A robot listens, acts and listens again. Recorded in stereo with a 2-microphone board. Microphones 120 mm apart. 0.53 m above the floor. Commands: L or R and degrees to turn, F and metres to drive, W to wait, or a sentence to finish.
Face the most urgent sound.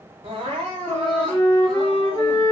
R50
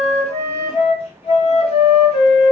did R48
W
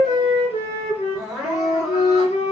Found it: crying, straight ahead.